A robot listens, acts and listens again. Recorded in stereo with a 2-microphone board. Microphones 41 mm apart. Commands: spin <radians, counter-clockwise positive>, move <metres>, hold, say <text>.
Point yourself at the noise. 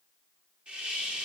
spin -0.35
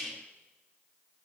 say Found it: a hiss, straight ahead.